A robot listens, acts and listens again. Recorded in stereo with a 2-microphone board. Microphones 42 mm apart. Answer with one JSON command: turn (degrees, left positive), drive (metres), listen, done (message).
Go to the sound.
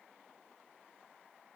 {"listen": true}
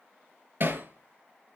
{"turn": -50}
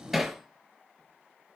{"drive": 1.0}
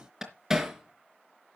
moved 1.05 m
{"turn": -10}
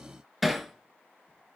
{"drive": 1.0}
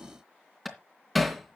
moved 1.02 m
{"drive": 1.0}
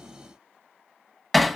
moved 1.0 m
{"drive": 1.0}
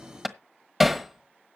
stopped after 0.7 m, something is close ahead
{"done": "I am next to the hammering."}